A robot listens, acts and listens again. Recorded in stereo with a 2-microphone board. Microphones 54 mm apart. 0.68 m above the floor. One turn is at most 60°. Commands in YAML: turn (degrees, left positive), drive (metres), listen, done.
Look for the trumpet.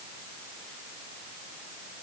listen: true
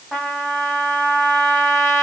turn: 30
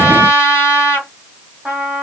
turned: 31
turn: -20
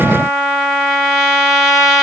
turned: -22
done: "Found it: a trumpet, straight ahead, 2 to 4 m away."